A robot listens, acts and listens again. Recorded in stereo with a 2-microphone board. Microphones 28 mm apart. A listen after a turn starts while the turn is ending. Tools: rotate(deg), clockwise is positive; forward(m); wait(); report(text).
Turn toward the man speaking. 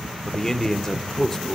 rotate(-20)
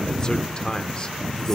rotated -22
rotate(-140)
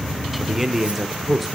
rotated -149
rotate(10)
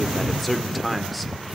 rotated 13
report("Found it: a man speaking, straight ahead, 1 to 2 m away.")